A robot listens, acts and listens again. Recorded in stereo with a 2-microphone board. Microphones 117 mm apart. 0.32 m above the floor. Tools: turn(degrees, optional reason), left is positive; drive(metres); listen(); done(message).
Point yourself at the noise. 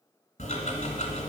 turn(degrees=75, reason="The ticking: about 75° left or 105° left.")
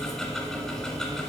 done("Facing the ticking, 1 to 2 m away.")